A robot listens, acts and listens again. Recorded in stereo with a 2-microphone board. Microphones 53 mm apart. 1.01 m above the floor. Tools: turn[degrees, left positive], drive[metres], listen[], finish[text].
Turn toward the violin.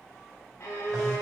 Thought: The violin: about 75° left or 105° left.
Action: turn[75]
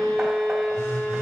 Action: finish[Found it: a violin, straight ahead.]